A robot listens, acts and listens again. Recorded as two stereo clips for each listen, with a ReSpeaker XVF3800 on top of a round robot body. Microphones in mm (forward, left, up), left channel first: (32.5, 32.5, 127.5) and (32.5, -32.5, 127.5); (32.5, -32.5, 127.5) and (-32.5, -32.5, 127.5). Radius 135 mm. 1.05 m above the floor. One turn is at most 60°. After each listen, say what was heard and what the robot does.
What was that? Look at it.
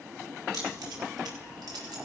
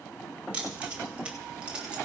The keys jangling: 105° right. Turn 60° right.
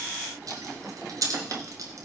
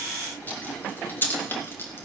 The keys jangling is now 55° right. Turn 55° right.
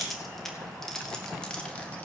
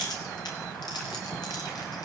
The keys jangling is now 15° left. Turn 15° left.
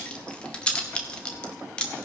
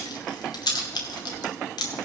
The keys jangling is now 15° left. Turn 15° left.
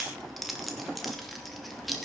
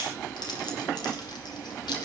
Facing the keys jangling.